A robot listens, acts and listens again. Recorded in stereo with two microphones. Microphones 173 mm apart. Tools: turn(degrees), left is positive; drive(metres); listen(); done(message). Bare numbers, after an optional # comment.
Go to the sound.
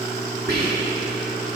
# The whispering: about 70° right or 110° right.
turn(-70)
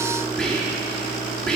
drive(1.0)
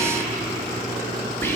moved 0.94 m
# The whispering is now 15° left.
turn(15)
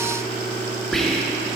drive(1.0)
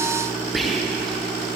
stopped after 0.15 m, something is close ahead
done("Arrived at the whispering, straight ahead.")